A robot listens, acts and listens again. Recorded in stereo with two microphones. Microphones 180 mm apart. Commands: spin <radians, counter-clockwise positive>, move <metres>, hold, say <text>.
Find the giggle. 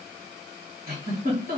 spin -0.96
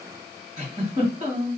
spin -0.79
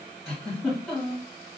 say Facing the giggle.